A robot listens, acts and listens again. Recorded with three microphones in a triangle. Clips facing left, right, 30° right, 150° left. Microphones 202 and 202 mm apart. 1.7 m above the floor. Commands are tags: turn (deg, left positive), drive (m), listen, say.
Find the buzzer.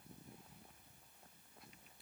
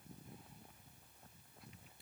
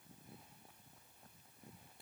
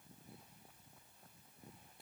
<listen/>
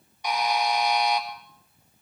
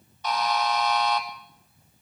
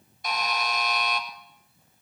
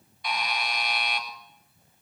<turn deg="15"/>
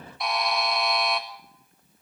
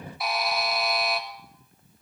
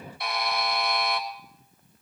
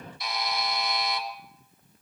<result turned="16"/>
<say>Facing the buzzer.</say>